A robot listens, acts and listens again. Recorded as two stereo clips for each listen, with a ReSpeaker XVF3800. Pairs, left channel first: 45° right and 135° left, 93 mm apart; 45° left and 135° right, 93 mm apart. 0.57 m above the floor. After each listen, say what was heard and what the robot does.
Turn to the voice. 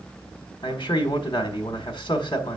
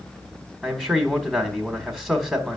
The man speaking: 40° right. Turn 40° right.
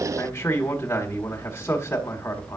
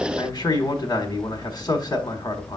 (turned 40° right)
The man speaking is now 20° left. Turn 20° left.
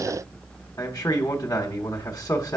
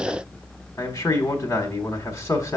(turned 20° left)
Facing the man speaking, 1 to 2 m away.